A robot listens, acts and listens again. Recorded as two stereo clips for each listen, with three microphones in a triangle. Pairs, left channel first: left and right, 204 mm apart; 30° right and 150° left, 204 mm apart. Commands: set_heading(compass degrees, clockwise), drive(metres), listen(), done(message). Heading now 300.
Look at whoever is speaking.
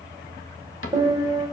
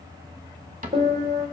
listen()
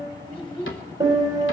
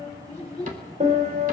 set_heading(275)
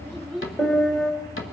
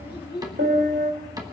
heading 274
done("Found it: a child speaking, straight ahead.")